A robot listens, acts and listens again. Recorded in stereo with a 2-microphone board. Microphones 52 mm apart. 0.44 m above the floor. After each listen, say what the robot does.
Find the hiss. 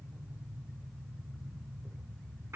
Keep listening.
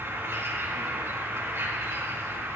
Keep listening.
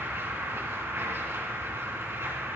I can't make out a hiss to turn to.